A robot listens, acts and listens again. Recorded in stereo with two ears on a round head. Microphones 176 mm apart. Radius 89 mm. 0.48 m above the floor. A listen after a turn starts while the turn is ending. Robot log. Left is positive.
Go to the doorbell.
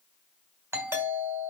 cmd yaw -30
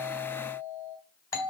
note: So it is at 20° left.
cmd yaw +20
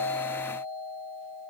cmd fwd 1.0
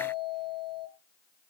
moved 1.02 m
cmd fwd 1.0
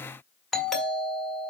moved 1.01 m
cmd fwd 1.0
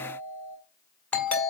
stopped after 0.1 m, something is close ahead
note: The doorbell is now 10° left.
cmd yaw +10
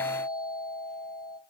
end: I am next to the doorbell.